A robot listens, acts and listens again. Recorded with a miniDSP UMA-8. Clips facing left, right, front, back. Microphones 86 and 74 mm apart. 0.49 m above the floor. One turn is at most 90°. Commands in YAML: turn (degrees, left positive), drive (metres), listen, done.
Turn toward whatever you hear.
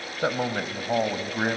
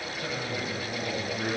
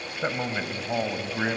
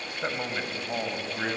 turn: 70
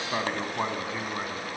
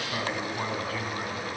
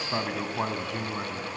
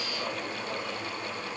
turn: 20
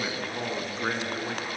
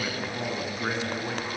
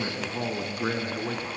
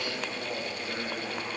done: "Found it: a man speaking, straight ahead."